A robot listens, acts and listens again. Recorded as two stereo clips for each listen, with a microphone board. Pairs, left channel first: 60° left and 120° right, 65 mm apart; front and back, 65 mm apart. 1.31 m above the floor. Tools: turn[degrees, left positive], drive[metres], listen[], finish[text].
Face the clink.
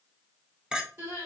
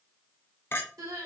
Thought: The clink: 50° right.
Action: turn[-50]
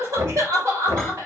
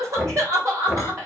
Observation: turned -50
Action: listen[]
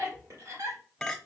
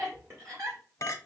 Thought: The clink is now 25° right.
Action: turn[-25]
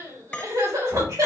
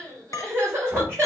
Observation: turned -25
Thought: The clink is now 10° right.
Action: turn[-10]
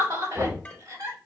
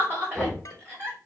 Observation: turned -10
Action: listen[]
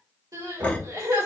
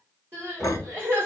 Action: listen[]
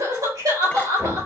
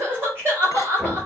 Action: finish[Facing where the clink came from. I can't hear it now.]